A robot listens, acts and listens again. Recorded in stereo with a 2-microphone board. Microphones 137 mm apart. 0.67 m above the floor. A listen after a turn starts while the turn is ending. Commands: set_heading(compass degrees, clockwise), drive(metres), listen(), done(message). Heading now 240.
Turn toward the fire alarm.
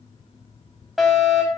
set_heading(210)
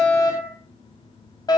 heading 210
set_heading(60)
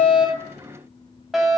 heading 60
done("Found it: a fire alarm, straight ahead.")